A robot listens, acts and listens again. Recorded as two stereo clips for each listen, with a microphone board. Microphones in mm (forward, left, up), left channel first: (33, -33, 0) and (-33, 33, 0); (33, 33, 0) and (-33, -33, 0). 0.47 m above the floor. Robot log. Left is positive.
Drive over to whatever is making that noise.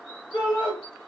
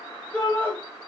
note: The shout: 20° right.
cmd yaw -20
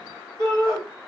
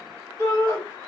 cmd fwd 1.0
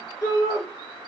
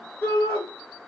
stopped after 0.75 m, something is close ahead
end: I am next to the shout.